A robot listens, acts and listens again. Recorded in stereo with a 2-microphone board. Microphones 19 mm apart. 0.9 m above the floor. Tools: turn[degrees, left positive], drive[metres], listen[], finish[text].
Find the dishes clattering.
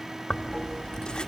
Action: listen[]
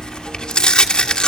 Action: listen[]
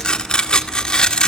Action: finish[I can't make out dishes clattering to turn to.]